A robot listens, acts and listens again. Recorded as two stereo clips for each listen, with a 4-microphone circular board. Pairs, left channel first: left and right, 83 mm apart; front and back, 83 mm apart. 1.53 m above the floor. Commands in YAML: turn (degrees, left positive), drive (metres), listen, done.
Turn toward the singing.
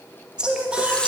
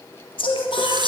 turn: -10
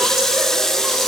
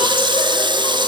listen: true
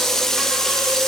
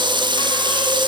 listen: true
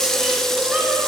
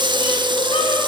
turn: -15
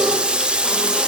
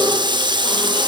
listen: true
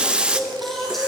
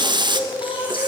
done: "Found it: singing, straight ahead."